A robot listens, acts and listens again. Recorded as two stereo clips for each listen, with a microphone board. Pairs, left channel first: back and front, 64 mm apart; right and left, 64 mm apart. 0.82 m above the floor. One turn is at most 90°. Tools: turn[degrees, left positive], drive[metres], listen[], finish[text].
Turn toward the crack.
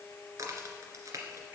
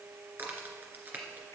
Thought: The crack: 30° left.
Action: turn[30]
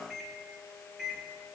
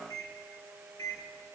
Action: finish[I heard a crack from this way, but can't make it out now.]